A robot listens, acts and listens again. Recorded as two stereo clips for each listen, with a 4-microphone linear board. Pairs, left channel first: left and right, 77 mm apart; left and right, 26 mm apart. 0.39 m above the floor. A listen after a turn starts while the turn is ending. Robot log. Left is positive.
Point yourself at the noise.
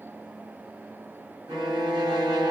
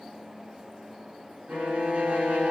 cmd yaw -90
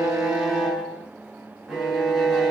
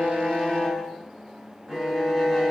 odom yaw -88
end: Facing the violin, 1 to 2 m away.